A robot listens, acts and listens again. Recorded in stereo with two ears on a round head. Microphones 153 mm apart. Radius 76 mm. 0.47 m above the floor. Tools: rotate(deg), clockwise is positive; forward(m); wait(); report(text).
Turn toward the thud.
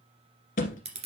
rotate(-50)
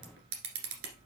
wait()
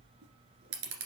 report("I heard a thud, but can't make it out now. It was about straight ahead or 80° left.")